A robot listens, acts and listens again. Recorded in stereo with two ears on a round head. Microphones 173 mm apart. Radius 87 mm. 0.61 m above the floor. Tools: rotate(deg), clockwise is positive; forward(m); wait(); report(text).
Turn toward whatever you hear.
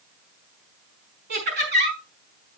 rotate(60)
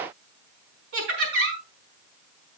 rotate(60)
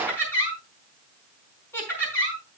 rotate(-10)
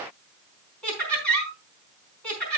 report("Facing the laughter, over 4 m away.")